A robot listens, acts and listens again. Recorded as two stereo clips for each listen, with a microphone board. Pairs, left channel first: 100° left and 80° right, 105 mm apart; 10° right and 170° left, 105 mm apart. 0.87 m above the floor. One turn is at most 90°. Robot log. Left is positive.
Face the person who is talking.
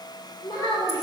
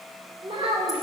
note: The child speaking: 145° left.
cmd yaw +90
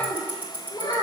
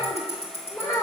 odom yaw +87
note: The child speaking is now 50° left.
cmd yaw +50
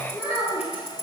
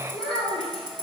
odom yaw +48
end: Found it: a child speaking, straight ahead.